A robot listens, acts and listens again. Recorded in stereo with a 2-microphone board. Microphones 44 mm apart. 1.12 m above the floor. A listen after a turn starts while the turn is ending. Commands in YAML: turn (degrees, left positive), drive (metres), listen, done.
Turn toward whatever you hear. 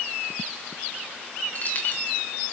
listen: true
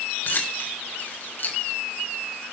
turn: 45
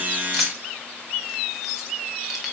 done: "Found it: keys jangling, straight ahead, 2 to 4 m away."